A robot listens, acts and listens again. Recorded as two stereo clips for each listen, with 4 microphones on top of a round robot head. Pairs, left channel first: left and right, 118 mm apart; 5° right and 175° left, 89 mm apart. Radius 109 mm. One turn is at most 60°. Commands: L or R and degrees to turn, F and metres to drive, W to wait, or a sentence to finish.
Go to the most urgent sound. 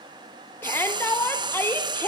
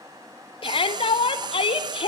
L15
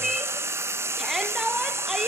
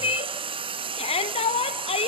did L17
F1.0
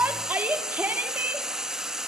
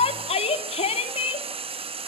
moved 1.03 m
R10
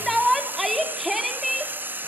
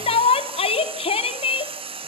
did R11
F1.0
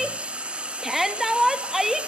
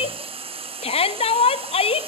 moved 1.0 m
F1.0
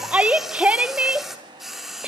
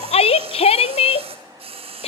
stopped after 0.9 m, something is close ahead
R10
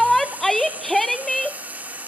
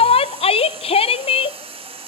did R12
I am next to the shout.